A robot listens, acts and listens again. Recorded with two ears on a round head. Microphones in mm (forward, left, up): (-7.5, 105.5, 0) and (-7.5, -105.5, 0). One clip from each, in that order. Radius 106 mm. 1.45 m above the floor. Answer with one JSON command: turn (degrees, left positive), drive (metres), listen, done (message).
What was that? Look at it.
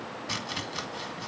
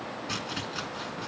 {"turn": 20}
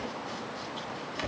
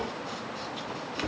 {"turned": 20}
{"done": "Facing the chopping."}